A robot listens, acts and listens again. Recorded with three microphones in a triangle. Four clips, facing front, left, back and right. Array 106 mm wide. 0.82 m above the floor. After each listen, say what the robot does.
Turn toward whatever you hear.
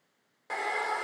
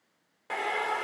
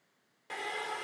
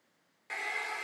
Turn 45° left.
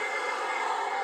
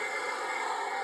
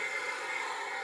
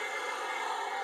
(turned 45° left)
Found it: a hair dryer, straight ahead.